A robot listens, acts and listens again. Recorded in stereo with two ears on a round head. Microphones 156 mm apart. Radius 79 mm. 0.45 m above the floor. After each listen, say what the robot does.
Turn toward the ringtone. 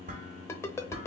Turn 15° left.
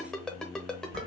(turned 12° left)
Found it: a ringtone, straight ahead.